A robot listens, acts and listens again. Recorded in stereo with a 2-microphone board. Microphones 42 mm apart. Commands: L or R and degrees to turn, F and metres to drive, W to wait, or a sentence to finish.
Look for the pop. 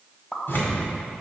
L20
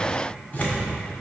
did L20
W
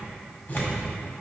I heard a pop, but can't make it out now. It was about straight ahead or 140° left.